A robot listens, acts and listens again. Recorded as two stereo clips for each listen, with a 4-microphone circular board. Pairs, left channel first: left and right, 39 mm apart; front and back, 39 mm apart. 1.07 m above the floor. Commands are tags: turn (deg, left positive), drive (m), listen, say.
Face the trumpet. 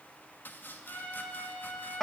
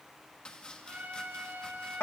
<turn deg="135"/>
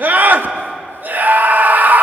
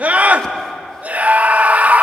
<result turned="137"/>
<listen/>
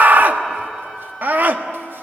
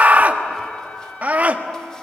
<listen/>
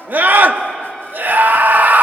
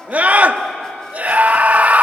<say>Facing where the trumpet came from. I can't hear it now.</say>